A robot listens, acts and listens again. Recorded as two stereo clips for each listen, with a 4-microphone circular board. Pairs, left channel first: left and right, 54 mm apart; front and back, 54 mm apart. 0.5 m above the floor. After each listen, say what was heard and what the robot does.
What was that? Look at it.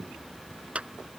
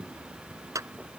The clap: 160° right. Turn 160° right.
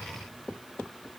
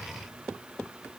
Keep listening.
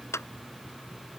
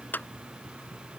The clap is now 55° left. Turn 55° left.
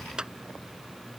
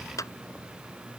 The clap is now 15° right. Turn 15° right.
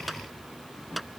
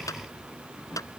Found it: a clap, straight ahead.